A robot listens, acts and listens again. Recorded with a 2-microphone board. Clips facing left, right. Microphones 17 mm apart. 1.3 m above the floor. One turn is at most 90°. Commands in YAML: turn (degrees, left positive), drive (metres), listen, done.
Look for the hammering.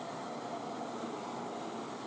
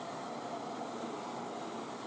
listen: true
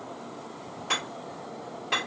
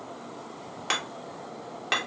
turn: -60
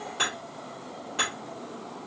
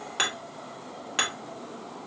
turn: -60
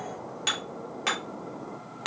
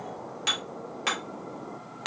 done: "Found it: hammering, straight ahead, 1 to 2 m away."